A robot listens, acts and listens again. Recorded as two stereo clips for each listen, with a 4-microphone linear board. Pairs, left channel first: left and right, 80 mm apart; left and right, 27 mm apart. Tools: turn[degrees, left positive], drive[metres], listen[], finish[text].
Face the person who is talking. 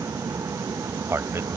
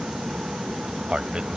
Thought: The man speaking: about 35° right or 145° right.
Action: turn[-35]
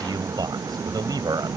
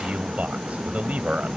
Thought: So it is at 110° right.
Action: turn[-110]
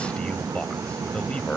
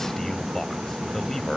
Thought: The man speaking is now 15° left.
Action: turn[15]
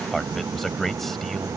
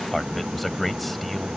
Action: finish[Facing the man speaking.]